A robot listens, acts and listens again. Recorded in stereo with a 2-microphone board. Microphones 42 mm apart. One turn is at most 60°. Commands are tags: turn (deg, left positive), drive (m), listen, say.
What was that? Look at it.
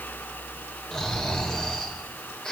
<turn deg="15"/>
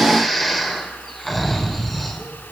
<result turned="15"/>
<say>Found it: snoring, straight ahead.</say>